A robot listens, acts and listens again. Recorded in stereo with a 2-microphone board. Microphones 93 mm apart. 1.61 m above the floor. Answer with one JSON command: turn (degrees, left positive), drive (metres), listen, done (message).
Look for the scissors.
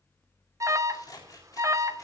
{"turn": 40}
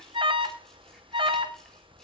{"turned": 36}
{"done": "Facing the scissors, 2 to 4 m away."}